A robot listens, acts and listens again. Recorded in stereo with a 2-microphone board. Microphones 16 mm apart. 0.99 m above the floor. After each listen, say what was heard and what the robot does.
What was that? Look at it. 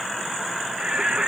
The singing: about 65° right or 115° right. Turn 65° right.
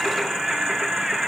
So it is at 45° right. Turn 45° right.
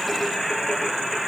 Found it: singing, straight ahead.